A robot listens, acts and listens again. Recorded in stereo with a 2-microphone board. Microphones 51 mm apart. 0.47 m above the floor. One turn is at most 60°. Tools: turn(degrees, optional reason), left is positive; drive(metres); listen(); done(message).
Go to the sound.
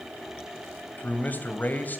turn(degrees=35, reason="The man speaking: about 35° left or 145° left.")
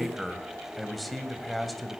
drive(metres=1.0)
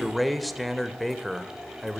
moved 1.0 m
drive(metres=1.0)
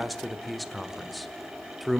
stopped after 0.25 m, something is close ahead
done("Arrived at the man speaking, straight ahead.")